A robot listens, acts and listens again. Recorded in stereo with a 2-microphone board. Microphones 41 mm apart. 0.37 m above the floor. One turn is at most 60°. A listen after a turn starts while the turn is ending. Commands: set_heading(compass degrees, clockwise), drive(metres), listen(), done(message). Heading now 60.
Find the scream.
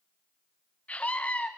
set_heading(25)
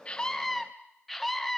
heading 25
done("Found it: a scream, straight ahead, 2 to 4 m away.")